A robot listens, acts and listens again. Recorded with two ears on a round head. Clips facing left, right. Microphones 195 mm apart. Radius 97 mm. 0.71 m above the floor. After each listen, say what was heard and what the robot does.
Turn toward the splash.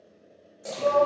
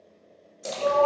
The splash: about 60° right or 120° right. Turn 60° right.
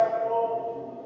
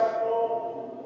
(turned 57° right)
Keep listening.
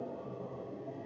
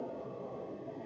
I heard a splash, but can't make it out now. It was about 5° right or 65° right.